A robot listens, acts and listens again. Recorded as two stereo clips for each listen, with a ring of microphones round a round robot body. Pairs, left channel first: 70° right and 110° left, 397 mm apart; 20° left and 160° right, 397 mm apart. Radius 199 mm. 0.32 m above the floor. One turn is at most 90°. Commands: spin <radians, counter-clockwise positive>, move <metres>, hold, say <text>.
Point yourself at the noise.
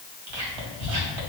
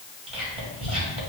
spin 1.57
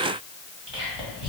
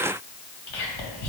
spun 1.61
spin 0.70
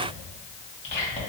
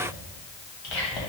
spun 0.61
say Facing the whispering, 2 to 4 m away.